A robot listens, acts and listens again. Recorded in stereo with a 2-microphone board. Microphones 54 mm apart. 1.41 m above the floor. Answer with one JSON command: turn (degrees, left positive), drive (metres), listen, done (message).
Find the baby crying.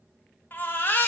{"turn": 40}
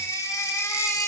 {"turn": 100}
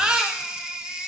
{"turn": -15}
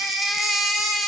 {"done": "Found it: a baby crying, straight ahead, 1 to 2 m away."}